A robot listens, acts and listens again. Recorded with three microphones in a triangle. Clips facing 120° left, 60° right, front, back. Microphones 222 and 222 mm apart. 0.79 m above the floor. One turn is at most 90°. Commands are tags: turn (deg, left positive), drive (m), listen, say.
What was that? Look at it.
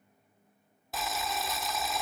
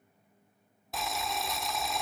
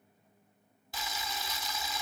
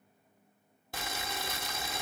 <turn deg="-90"/>
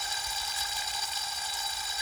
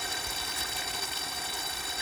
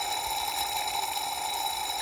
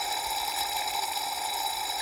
<turn deg="-90"/>
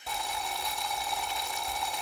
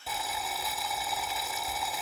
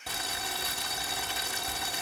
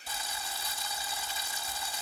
<turn deg="25"/>
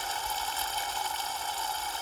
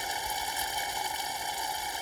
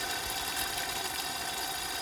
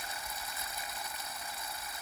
<turn deg="15"/>
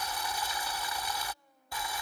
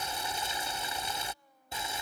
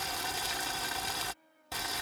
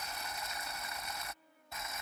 <say>Found it: boiling, straight ahead.</say>